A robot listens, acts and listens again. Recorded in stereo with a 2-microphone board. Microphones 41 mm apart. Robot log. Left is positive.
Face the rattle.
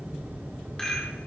cmd yaw +30
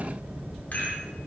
note: So it is at 135° left.
cmd yaw +135
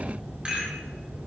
note: The rattle is now 30° right.
cmd yaw -30
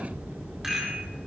note: The rattle is now 10° right.
cmd yaw -10
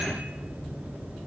cmd idle
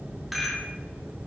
end: Found it: a rattle, straight ahead.